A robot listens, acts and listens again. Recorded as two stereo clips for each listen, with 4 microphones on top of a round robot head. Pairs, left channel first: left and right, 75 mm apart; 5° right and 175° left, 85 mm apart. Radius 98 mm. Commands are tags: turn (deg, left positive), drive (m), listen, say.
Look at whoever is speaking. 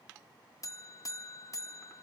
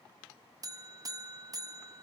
<listen/>
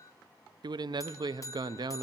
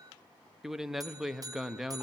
<turn deg="-100"/>
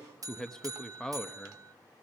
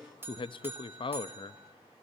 <turn deg="10"/>
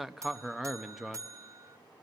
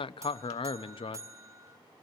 <say>Facing the man speaking, under 1 m away.</say>